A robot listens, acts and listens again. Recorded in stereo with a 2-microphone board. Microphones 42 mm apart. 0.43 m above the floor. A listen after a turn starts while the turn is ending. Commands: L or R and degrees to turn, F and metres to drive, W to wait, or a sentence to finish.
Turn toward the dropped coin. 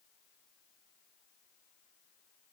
W
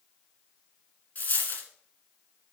L45
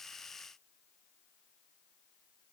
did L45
W
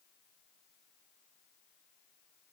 I heard a dropped coin, but can't make it out now. It was about straight ahead or 90° left.